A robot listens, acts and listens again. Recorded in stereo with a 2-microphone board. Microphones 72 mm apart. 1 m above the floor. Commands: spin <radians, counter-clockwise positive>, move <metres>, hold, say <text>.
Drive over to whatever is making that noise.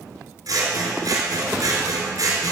spin -1.13
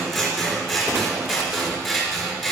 move 1.0
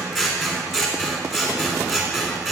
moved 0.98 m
move 1.0
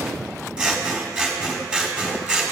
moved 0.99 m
spin -0.26
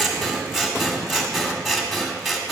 move 1.0
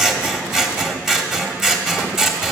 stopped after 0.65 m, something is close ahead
spin -0.17
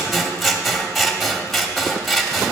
say Arrived at the scissors, straight ahead.